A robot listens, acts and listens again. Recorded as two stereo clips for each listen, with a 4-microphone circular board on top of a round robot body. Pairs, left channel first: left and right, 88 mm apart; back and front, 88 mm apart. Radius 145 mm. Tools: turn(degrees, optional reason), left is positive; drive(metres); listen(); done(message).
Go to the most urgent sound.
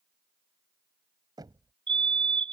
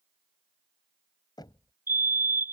turn(degrees=-65, reason="The fire alarm: 65° right.")
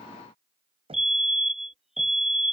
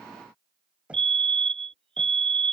drive(metres=1.0)
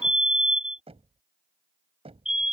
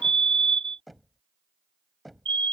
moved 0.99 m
drive(metres=1.0)
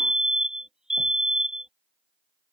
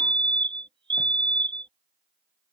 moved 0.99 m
drive(metres=1.0)
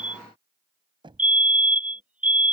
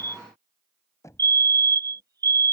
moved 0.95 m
turn(degrees=-20, reason="The fire alarm is now 20° right.")
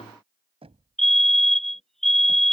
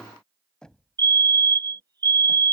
drive(metres=1.0)
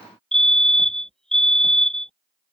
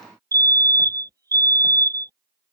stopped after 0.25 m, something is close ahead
turn(degrees=10, reason="The fire alarm is now 10° left.")
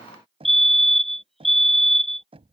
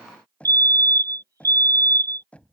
done("Arrived at the fire alarm, straight ahead.")